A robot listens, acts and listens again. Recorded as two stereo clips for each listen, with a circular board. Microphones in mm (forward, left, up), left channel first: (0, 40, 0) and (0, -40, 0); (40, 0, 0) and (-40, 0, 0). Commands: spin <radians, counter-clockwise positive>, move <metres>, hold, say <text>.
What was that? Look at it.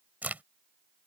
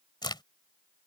spin -0.35
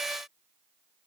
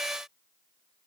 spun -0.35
say I heard a crack from this way, but can't make it out now.